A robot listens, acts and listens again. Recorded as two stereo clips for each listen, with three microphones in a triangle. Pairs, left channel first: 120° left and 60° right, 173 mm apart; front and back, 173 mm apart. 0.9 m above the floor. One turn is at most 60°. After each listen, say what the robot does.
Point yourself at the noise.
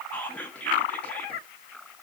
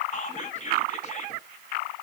Turn 40° left.
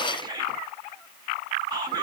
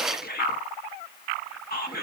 Facing the whispering.